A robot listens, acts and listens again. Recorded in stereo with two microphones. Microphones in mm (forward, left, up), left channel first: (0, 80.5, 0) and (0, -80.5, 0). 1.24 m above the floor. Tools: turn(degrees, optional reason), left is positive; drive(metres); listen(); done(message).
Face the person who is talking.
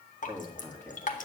turn(degrees=30)
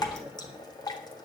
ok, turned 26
turn(degrees=-15, reason="So it is at 15° right.")
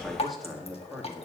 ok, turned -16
done("Facing the man speaking, 2 to 4 m away.")